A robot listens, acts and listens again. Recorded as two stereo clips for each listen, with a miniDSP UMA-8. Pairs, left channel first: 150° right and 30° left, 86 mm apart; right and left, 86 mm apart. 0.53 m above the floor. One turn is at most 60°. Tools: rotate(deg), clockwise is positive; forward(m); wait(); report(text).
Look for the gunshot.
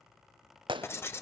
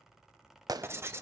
rotate(-50)
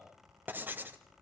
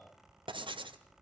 report("I heard a gunshot from this way, but can't make it out now.")